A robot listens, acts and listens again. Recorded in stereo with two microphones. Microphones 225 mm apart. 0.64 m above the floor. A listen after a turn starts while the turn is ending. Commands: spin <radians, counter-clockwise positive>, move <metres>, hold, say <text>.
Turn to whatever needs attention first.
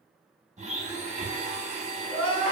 spin 1.13
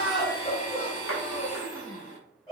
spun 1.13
spin 0.35
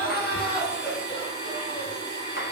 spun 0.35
say Found it: crying, straight ahead, 1 to 2 m away.